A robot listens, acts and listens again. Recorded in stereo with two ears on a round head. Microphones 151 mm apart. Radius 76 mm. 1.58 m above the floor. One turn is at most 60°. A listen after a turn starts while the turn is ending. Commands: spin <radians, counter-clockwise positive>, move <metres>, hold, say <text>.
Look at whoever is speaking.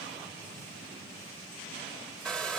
hold
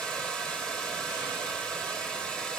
hold
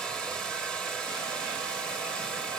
say I can't make out anyone speaking, only a hair dryer.